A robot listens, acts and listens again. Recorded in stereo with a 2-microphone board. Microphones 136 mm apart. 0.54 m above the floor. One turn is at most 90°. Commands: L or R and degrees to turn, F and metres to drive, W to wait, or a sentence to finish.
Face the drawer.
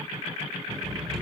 L30
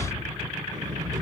R30
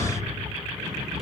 Facing the drawer, over 4 m away.